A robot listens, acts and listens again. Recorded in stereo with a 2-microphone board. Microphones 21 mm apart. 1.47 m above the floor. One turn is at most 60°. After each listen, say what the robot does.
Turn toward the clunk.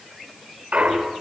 Turn 60° right.
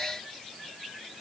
Keep listening.
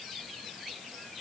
I heard a clunk, but can't make it out now. It was about straight ahead or 60° right.